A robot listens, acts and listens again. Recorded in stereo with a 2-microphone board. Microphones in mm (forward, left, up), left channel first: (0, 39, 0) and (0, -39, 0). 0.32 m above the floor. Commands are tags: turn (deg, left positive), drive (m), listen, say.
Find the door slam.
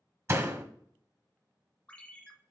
<turn deg="-35"/>
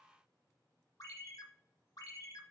<listen/>
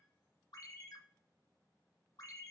<say>I heard a door slam, but can't make it out now. It was about straight ahead or 110° right.</say>